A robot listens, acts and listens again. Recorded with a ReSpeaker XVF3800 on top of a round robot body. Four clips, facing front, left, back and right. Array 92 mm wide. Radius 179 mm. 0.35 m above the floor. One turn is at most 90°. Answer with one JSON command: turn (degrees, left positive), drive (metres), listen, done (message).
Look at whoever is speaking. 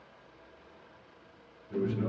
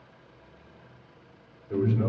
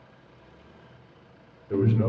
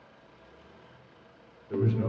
{"turn": 90}
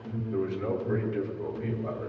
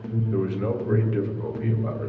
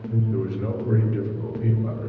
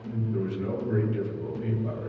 {"turn": 90}
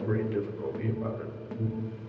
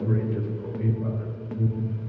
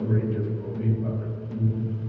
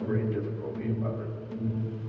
{"done": "Facing the man speaking, 1 to 2 m away."}